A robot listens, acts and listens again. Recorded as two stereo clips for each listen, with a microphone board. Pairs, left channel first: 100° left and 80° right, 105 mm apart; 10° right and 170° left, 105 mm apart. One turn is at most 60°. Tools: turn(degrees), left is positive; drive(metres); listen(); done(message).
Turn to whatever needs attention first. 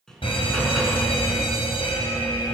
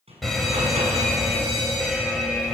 turn(degrees=60)
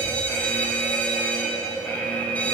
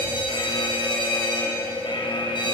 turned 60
turn(degrees=25)
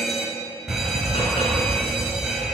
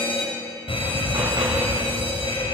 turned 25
done("Found it: a fire alarm, straight ahead.")